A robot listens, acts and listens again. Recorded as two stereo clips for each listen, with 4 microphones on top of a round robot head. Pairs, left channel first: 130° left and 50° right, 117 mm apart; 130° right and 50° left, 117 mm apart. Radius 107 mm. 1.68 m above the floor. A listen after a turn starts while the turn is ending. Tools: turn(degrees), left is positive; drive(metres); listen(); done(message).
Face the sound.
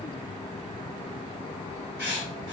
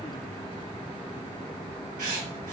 turn(degrees=65)
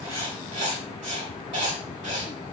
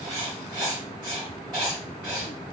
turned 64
done("Found it: writing, straight ahead.")